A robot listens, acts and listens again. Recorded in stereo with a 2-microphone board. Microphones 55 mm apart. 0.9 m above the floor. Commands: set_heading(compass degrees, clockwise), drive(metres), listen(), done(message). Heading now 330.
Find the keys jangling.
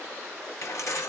set_heading(260)
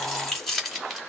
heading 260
done("Found it: keys jangling, straight ahead.")